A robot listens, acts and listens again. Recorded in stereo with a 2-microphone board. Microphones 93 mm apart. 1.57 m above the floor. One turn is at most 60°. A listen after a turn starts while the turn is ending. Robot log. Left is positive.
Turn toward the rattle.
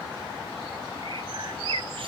cmd idle
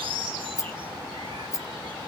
note: The rattle: about 35° left or 145° left.
cmd yaw +35
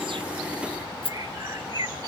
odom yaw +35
note: So it is at 110° left.
cmd yaw +60
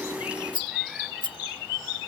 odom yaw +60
note: The rattle is now 65° left.
cmd yaw +60
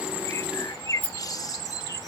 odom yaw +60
note: The rattle is now 15° left.
cmd yaw +15
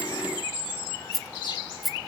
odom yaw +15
end: Facing the rattle.